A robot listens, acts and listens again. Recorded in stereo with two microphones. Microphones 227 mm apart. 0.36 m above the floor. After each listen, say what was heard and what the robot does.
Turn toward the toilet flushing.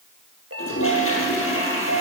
The toilet flushing: about 70° left or 110° left. Turn 70° left.
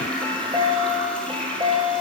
Facing the toilet flushing.